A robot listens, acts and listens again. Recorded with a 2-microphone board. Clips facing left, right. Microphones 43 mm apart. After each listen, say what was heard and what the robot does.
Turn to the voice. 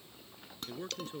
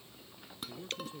The man speaking: about 45° left or 135° left. Turn 45° left.
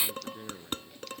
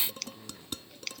So it is at 90° left. Turn 90° left.
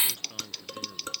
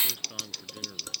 The man speaking is now 15° right. Turn 15° right.
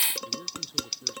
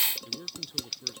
Facing the man speaking.